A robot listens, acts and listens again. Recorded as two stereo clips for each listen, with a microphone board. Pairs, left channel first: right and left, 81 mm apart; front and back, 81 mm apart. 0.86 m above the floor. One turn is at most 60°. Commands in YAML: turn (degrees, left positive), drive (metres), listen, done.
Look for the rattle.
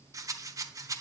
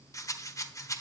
turn: 45
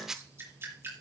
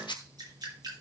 done: "Facing the rattle."